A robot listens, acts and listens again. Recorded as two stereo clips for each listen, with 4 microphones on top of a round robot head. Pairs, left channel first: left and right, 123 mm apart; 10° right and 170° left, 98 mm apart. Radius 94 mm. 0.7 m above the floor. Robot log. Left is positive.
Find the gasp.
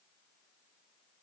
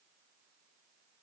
cmd idle
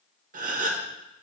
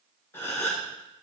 note: The gasp: 85° right.
cmd yaw -85
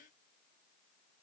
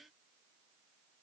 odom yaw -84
end: Facing where the gasp came from. I can't hear it now.